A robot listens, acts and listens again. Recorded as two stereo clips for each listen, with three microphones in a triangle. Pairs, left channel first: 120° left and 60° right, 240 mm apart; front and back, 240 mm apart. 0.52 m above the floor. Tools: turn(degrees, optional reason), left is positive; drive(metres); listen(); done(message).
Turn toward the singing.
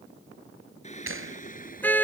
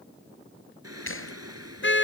turn(degrees=175, reason="The singing: 175° left.")
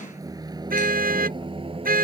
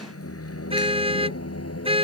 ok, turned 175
done("Found it: singing, straight ahead.")